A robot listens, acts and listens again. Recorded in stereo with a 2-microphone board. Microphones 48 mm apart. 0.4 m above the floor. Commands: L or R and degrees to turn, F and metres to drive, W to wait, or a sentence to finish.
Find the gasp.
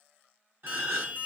R55
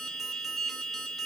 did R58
W
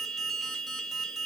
I heard a gasp, but can't make it out now. It was about straight ahead or 65° right.